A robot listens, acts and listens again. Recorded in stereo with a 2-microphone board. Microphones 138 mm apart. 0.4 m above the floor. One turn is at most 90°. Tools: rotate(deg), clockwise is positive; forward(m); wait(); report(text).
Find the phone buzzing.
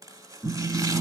rotate(30)
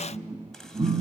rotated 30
rotate(90)
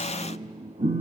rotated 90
rotate(70)
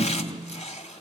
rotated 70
rotate(25)
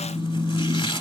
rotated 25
report("Found it: a phone buzzing, straight ahead.")